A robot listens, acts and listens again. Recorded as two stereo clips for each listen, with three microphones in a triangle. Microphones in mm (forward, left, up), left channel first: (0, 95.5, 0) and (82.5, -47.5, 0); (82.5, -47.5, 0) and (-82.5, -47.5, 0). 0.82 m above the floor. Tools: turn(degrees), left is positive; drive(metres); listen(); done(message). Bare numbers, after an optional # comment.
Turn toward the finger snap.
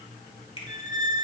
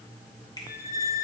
# The finger snap: 65° left.
turn(65)
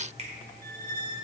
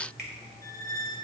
listen()
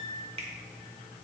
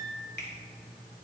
# The finger snap is now 10° right.
turn(-10)
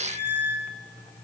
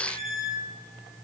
listen()
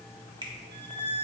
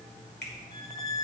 done("Found it: a finger snap, straight ahead.")